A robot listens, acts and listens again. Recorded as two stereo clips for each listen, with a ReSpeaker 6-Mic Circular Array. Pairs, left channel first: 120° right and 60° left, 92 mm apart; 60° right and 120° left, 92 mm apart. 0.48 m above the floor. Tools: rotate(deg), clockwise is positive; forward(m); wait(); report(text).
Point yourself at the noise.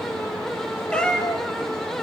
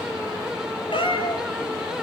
rotate(35)
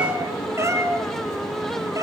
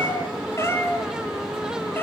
rotate(-10)
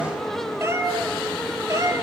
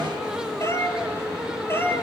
report("Facing the cat meowing, 2 to 4 m away.")